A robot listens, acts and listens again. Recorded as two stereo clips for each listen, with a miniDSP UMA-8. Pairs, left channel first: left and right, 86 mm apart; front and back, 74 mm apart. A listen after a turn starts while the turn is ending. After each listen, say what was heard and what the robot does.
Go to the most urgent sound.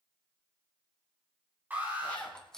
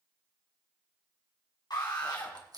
The alarm: 20° right. Turn 20° right.
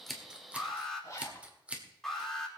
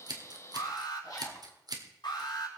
Drive 1.0 m forward.
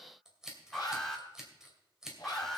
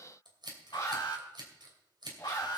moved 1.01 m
Drive 1.0 m forward.
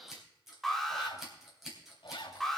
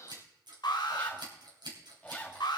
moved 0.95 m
Drive 1.0 m forward.
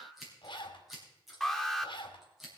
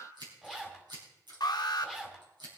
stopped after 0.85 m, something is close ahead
Arrived at the alarm, straight ahead.